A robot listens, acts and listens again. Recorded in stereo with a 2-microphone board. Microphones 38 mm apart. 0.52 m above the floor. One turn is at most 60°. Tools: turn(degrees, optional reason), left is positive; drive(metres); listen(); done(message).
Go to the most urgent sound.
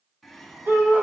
turn(degrees=-60, reason="The shout: about 75° right or 105° right.")
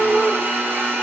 turn(degrees=-25, reason="So it is at 25° right.")
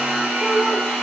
listen()
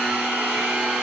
listen()
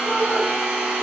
done("I heard a shout from this way, but can't make it out now. I did not reach it.")